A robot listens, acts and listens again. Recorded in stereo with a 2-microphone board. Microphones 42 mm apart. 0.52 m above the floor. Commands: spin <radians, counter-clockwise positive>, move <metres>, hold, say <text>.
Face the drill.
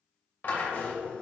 spin 1.13
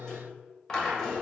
spin 0.26
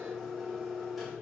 say Found it: a drill, straight ahead.